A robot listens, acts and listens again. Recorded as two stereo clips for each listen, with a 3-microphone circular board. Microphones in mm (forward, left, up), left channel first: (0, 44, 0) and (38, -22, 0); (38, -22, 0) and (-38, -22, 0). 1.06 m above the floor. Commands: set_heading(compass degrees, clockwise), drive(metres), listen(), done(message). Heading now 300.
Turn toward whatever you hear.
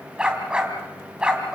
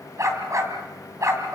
set_heading(75)
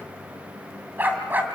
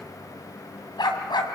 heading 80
done("Found it: a dog barking, straight ahead.")